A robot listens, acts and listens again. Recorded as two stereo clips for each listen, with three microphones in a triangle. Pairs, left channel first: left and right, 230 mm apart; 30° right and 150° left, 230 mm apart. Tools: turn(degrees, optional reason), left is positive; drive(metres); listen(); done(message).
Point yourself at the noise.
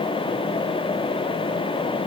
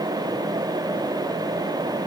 listen()
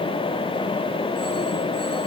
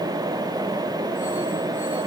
listen()
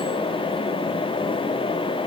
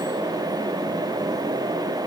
done("I can't make out anything to turn to.")